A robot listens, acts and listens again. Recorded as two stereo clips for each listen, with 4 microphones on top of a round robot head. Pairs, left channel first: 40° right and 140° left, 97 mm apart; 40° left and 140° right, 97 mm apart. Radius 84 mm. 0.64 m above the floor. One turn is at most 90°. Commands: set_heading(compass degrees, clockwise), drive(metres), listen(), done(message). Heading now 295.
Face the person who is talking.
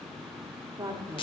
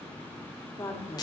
set_heading(205)
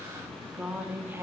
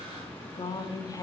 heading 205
set_heading(120)
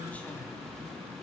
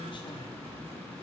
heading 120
listen()
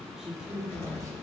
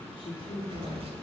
set_heading(55)
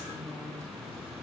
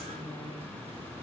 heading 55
listen()
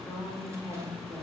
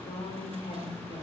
set_heading(35)
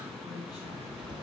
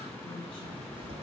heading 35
listen()
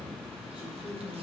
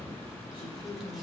done("Found it: a woman speaking, straight ahead.")